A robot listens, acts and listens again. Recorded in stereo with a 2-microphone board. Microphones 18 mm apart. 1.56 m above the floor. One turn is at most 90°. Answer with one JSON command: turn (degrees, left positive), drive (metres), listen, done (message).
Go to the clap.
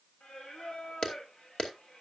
{"turn": 55}
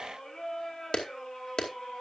{"turn": 65}
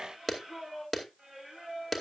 {"drive": 1.0}
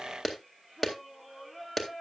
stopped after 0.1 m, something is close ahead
{"done": "Something is in my way. I am facing the clap but have not reached it."}